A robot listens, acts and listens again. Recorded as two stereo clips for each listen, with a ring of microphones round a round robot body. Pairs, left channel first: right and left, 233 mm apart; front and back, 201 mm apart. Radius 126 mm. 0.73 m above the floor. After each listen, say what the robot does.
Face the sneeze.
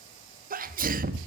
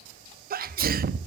Turn 140° left.
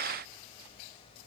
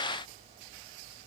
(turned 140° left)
Facing where the sneeze came from. I can't hear it now.